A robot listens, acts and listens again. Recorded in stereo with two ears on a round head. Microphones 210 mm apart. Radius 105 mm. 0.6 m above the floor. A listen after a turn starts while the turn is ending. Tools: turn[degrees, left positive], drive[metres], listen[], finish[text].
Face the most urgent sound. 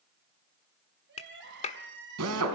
Thought: The crying: about 50° right or 130° right.
Action: turn[-50]
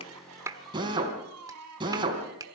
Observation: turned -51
Thought: So it is at 80° right.
Action: turn[-80]
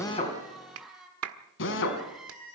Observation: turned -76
Action: finish[Facing the crying, 2 to 4 m away.]